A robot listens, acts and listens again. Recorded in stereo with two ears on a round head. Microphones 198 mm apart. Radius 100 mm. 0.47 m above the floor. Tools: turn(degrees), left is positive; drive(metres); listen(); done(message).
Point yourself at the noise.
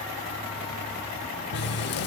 turn(degrees=50)
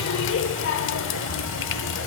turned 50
turn(degrees=70)
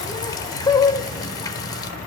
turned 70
turn(degrees=20)
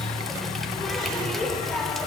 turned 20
done("Found it: a running tap, straight ahead, under 1 m away.")